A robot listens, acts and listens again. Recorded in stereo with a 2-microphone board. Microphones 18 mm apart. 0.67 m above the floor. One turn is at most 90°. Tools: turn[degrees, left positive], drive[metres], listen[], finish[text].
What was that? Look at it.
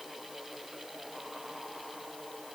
Action: listen[]
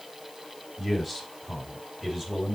Action: turn[-30]
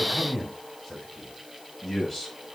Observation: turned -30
Thought: So it is at 10° left.
Action: turn[10]
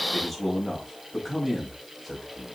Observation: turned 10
Action: finish[Facing the man speaking, over 4 m away.]